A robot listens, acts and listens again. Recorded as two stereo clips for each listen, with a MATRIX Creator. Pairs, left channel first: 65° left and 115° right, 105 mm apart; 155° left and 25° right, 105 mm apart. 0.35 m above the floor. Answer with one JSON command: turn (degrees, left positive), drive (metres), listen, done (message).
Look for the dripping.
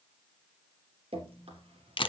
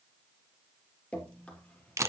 {"turn": -125}
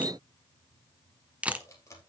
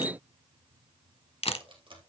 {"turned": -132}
{"turn": 10}
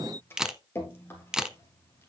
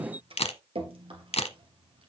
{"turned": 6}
{"done": "Facing the dripping, 2 to 4 m away."}